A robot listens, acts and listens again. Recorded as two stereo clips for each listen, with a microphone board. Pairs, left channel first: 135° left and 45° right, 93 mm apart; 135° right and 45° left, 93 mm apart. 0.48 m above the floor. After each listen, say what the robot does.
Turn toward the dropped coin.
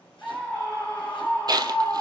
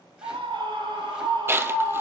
Turn 15° right.
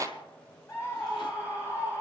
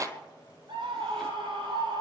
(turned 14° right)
I heard a dropped coin from this way, but can't make it out now.